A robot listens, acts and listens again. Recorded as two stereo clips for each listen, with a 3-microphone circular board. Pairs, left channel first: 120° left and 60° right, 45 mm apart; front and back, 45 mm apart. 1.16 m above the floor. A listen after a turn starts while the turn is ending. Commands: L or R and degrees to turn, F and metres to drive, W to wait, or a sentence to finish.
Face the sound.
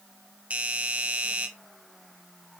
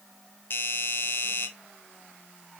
R10
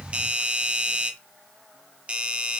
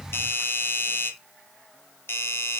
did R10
Facing the doorbell.